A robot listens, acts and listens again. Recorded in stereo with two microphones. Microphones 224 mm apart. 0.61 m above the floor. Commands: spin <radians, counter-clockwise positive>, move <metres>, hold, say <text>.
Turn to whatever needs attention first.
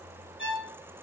hold
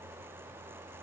hold
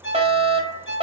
spin -0.44
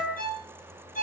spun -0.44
say Found it: a fire alarm, straight ahead, over 4 m away.